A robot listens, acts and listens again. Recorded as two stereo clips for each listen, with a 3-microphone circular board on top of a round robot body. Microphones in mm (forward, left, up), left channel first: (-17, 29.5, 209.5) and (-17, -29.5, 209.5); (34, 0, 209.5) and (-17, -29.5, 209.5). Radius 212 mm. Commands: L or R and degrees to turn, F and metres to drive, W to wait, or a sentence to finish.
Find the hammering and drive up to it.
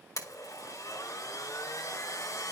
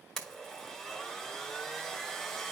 W
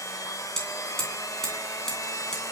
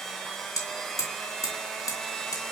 F1.0
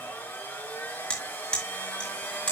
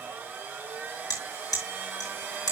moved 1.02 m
L15
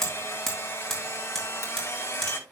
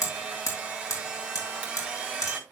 F1.0
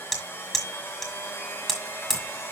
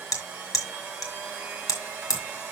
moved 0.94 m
F1.0
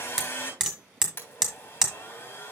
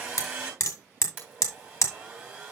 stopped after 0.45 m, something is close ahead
R10
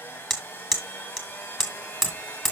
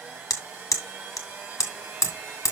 I am next to the hammering.